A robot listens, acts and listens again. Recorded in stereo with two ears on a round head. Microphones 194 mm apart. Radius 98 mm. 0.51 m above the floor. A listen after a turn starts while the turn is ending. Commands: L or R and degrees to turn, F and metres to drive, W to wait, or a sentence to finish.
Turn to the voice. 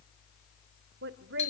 R55
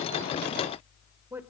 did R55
R10
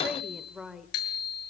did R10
Found it: a woman speaking, straight ahead, 1 to 2 m away.